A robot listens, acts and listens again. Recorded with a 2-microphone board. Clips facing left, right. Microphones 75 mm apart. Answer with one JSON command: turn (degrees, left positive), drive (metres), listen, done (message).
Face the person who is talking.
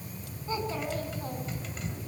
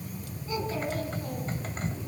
{"turn": 35}
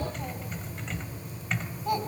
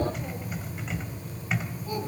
{"turn": 115}
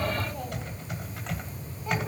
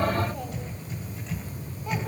{"listen": true}
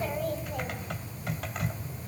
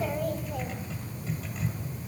{"done": "Facing the child speaking, over 4 m away."}